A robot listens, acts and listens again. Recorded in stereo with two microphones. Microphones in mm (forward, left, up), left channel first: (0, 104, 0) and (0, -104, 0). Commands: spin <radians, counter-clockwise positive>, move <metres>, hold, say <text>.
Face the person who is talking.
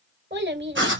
spin -1.05
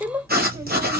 spin -0.26
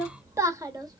spin -0.35
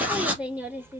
spin -0.17
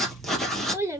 spin -0.26
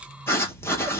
hold
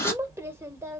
spin -0.17
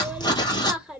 say Facing the child speaking.